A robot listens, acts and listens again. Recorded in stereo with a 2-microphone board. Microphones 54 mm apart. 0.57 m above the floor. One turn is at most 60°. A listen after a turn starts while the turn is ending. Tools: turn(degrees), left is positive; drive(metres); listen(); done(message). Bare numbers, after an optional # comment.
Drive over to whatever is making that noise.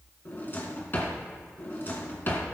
# The drawer: about 40° left or 140° left.
turn(40)
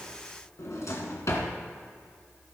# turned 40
# So it is at 100° left.
turn(60)
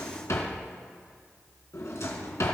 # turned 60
# The drawer is now 70° left.
turn(60)
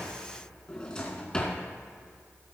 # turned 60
# The drawer is now 20° left.
turn(20)
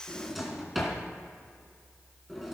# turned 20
drive(1.0)
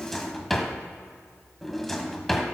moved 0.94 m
drive(1.0)
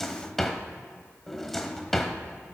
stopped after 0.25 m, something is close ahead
done("Arrived at the drawer, straight ahead.")